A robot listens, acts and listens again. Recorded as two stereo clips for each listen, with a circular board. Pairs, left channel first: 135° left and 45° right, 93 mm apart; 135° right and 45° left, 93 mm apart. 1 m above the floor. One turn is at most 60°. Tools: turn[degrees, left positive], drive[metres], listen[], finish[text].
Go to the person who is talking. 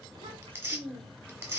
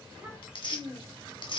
Thought: The child speaking: 35° right.
Action: turn[-35]
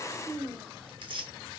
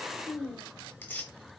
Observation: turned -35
Thought: The child speaking is now 10° left.
Action: turn[10]
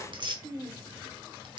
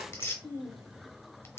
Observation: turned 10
Action: drive[1.0]
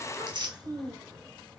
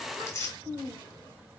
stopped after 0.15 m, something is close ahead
Action: finish[Something is in my way. I am facing the child speaking but have not reached it.]